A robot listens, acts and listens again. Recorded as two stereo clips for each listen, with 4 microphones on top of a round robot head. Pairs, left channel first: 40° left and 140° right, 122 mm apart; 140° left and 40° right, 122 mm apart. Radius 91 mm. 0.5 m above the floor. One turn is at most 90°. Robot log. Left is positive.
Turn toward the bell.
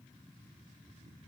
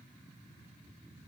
cmd idle
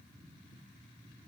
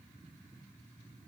cmd idle
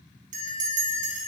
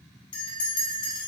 note: The bell: 165° right.
cmd yaw -90
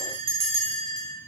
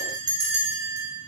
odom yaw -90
note: The bell is now 100° right.
cmd yaw -90
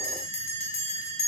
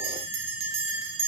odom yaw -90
end: Found it: a bell, straight ahead, under 1 m away.